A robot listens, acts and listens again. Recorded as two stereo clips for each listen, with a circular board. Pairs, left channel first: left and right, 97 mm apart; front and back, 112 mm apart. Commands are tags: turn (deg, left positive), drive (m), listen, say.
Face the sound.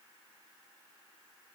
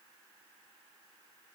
<listen/>
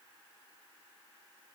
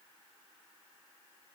<listen/>
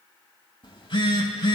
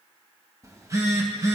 <turn deg="120"/>
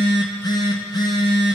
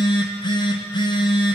<turn deg="45"/>
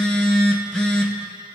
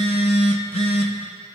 <turn deg="10"/>
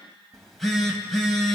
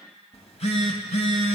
<say>Facing the phone buzzing, 2 to 4 m away.</say>